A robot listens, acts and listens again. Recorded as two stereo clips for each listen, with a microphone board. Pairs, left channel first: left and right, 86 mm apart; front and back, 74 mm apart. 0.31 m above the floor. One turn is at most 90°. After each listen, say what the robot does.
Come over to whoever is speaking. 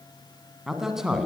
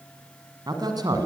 Turn 90° right.
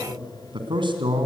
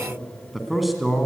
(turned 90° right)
Turn 90° right.
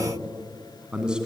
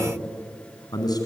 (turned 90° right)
Turn 10° right.
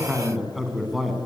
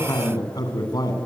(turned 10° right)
Drive 1.0 m forward.
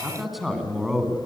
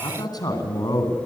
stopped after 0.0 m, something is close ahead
Blocked. The man speaking is further on, straight ahead.